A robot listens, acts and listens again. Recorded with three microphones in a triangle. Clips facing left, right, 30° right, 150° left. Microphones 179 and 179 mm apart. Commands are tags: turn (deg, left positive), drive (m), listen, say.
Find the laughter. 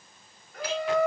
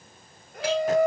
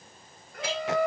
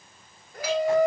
<turn deg="-140"/>
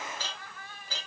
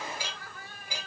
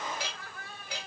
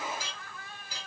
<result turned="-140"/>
<turn deg="-45"/>
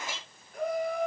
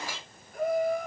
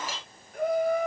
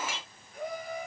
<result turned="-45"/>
<say>Facing the laughter, 2 to 4 m away.</say>